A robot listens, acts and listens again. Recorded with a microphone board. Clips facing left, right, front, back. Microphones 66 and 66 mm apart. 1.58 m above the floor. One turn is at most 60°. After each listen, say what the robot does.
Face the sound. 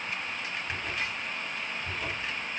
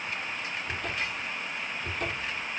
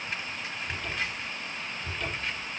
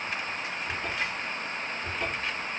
Turn 60° right.
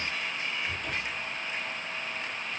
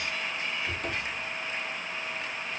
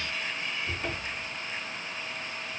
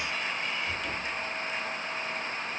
Turn 55° right.
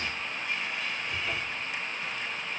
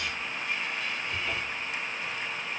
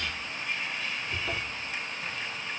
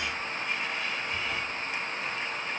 Keep listening.
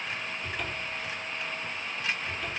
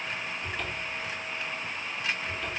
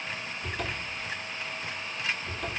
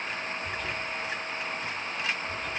Facing the cupboard door.